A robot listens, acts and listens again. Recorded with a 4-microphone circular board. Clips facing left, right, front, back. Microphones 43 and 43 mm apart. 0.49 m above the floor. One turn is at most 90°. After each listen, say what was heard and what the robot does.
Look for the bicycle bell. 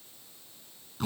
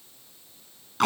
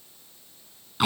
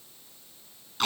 Keep listening.
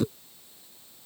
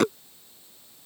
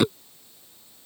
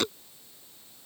Keep listening.
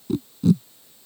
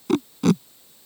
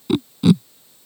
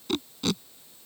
I can't make out a bicycle bell to turn to.